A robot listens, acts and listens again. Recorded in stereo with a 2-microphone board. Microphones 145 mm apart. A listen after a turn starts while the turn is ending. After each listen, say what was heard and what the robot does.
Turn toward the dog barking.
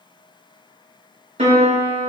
Keep listening.
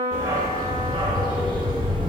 The dog barking: about 35° right or 145° right. Turn 35° right.
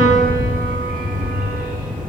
So it is at 90° right. Turn 90° right.
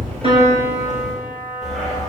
Found it: a dog barking, straight ahead.